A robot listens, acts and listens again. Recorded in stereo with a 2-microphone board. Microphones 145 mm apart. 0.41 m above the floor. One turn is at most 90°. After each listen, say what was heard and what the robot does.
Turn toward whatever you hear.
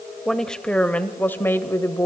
The woman speaking: about 20° left or 160° left. Turn 20° left.
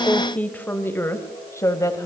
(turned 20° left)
The woman speaking: about 25° left or 155° left. Turn 25° left.
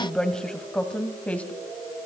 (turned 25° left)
Turn 30° left.
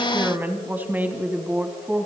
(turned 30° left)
So it is at 15° right. Turn 15° right.
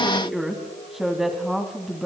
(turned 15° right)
Facing the woman speaking.